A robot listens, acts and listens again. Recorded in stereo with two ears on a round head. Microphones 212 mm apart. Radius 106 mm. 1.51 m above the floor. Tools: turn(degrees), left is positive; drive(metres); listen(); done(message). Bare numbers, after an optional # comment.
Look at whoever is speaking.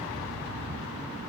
listen()
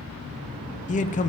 # The man speaking: about 30° left or 150° left.
turn(30)
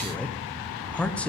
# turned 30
done("Found it: a man speaking, straight ahead.")